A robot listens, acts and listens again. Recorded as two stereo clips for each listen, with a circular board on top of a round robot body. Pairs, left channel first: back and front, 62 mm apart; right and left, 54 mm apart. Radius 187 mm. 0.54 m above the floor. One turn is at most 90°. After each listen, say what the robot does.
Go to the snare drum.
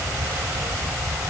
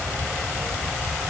Keep listening.
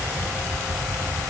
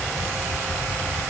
Keep listening.
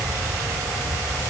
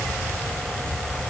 I can't make out a snare drum.